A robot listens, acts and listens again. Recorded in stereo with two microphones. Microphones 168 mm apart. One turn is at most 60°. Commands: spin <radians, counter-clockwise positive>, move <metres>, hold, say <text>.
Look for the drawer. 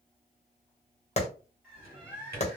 spin -1.05
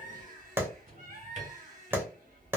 spin -0.96
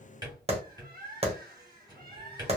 spin -0.44
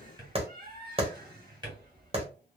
spin -0.44
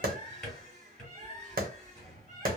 say Facing the drawer.